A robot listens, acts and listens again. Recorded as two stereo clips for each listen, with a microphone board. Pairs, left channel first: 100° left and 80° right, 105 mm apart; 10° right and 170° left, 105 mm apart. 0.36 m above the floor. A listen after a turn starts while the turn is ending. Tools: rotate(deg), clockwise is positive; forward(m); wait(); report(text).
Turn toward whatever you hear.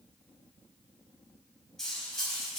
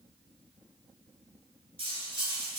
rotate(175)
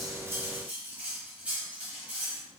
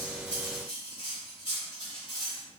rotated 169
report("Found it: cutlery clinking, straight ahead, 1 to 2 m away.")